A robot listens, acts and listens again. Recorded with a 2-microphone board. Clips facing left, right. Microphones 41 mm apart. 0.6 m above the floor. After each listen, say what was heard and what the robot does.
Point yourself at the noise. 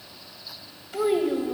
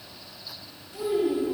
Turn 90° left.
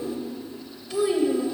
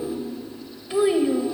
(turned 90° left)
So it is at 30° right. Turn 30° right.
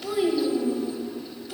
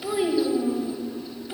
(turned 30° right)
The child speaking is now 25° right. Turn 25° right.
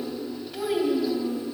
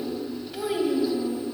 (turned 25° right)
Facing the child speaking, 1 to 2 m away.